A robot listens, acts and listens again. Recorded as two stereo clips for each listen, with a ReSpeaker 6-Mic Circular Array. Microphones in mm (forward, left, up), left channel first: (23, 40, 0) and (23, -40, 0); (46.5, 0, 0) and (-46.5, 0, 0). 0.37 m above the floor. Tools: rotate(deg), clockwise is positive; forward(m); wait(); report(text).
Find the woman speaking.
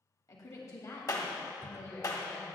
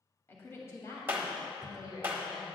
rotate(-30)
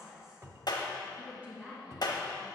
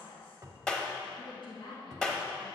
rotate(20)
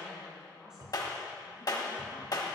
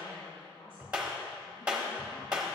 rotate(10)
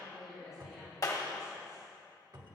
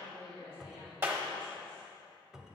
report("Facing the woman speaking.")